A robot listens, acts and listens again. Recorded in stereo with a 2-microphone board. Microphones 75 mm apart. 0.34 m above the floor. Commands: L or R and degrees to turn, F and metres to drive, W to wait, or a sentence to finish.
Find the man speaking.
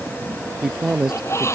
R30
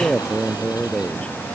L15
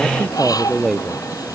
Facing the man speaking.